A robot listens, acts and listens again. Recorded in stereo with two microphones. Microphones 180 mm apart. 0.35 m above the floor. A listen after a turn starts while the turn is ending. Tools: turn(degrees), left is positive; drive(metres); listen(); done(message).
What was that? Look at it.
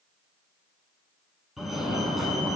turn(degrees=30)
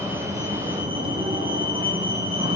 turn(degrees=-30)
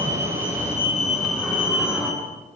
done("Found it: a fire alarm, straight ahead, over 4 m away.")